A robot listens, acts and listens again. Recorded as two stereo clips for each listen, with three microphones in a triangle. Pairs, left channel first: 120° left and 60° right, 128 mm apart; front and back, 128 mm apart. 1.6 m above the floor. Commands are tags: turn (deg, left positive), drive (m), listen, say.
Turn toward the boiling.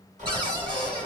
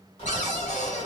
<turn deg="-45"/>
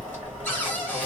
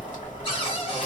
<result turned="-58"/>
<turn deg="15"/>
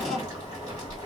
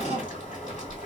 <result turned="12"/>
<say>Found it: boiling, straight ahead, 1 to 2 m away.</say>